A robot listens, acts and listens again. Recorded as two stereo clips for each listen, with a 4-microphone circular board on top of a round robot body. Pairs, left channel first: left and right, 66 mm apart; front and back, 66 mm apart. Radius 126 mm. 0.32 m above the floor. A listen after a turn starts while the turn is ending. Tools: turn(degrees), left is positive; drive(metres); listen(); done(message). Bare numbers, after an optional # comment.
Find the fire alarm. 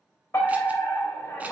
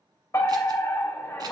# The fire alarm: 40° left.
turn(40)
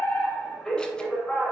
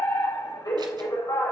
done("Found it: a fire alarm, straight ahead.")